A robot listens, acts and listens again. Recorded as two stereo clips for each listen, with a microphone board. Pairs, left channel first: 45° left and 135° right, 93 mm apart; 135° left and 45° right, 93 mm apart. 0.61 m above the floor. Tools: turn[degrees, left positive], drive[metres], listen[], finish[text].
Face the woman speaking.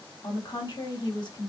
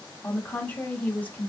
Thought: The woman speaking: 65° left.
Action: turn[65]
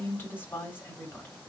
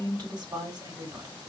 Thought: The woman speaking is now 15° right.
Action: turn[-15]
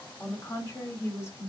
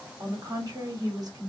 Thought: The woman speaking is now 10° right.
Action: turn[-10]
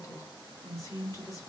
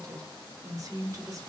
Action: finish[Facing the woman speaking, 2 to 4 m away.]